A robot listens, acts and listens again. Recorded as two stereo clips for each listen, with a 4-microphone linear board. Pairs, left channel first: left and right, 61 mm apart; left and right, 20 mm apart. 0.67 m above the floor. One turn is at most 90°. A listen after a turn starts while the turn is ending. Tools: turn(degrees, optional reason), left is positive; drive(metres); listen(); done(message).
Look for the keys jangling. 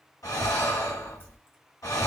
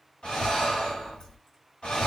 listen()
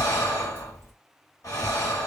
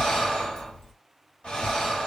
listen()
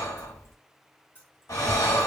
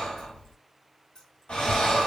turn(degrees=40, reason="The keys jangling: about 40° left or 140° left.")
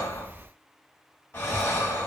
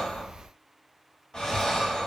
listen()
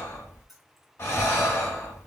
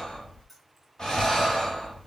done("Found it: keys jangling, straight ahead, 1 to 2 m away.")